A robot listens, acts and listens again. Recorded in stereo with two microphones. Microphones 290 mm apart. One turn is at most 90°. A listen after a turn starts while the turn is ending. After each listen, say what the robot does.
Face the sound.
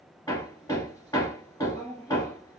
Turn 30° left.
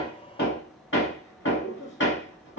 Turn 90° left.
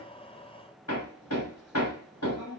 Turn 60° left.
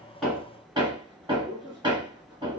Turn 15° right.
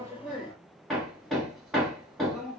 Found it: hammering, straight ahead.